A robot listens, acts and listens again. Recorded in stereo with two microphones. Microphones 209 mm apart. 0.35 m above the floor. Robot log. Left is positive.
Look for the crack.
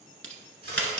note: The crack: about 70° right or 110° right.
cmd yaw -70
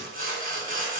cmd idle
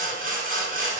end: I heard a crack, but can't make it out now. It was about straight ahead or 40° right.